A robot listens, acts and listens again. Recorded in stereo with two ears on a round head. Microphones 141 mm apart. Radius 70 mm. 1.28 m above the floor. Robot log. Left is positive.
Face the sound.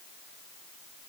cmd idle
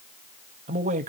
note: The man speaking: about 50° right or 130° right.
cmd yaw -50
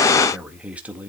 note: So it is at 10° right.
cmd yaw -10
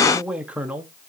note: The man speaking is now 10° right.
cmd yaw -10
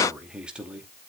note: The man speaking is now 10° right.
cmd yaw -10
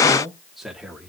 end: Found it: a man speaking, straight ahead.